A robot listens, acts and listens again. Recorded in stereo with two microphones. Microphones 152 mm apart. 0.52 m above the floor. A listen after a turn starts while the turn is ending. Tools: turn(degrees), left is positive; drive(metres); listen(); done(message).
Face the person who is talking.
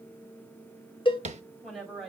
turn(degrees=30)
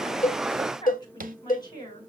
turn(degrees=150)
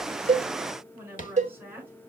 turn(degrees=-15)
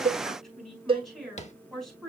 done("Found it: a woman speaking, straight ahead.")